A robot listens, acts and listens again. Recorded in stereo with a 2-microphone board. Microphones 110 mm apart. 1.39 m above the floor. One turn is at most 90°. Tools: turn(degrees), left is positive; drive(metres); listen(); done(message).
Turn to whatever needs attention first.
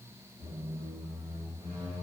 listen()
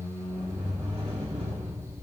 listen()
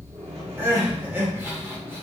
turn(degrees=-20)
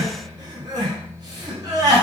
turn(degrees=-90)
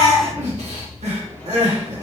turn(degrees=-80)
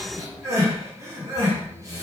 turn(degrees=-30)
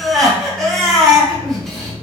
done("Found it: crying, straight ahead.")